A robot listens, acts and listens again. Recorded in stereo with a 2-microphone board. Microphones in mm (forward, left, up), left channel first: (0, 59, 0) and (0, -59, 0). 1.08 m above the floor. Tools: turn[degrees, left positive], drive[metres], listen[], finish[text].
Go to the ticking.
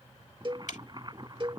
Action: turn[90]
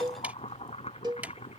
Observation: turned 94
Thought: So it is at 10° right.
Action: turn[-10]
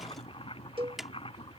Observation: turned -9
Action: drive[1.0]
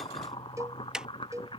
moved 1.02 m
Action: drive[1.0]
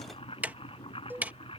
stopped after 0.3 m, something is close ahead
Thought: The ticking is now 15° right.
Action: turn[-15]
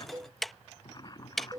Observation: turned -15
Action: finish[Arrived at the ticking, straight ahead.]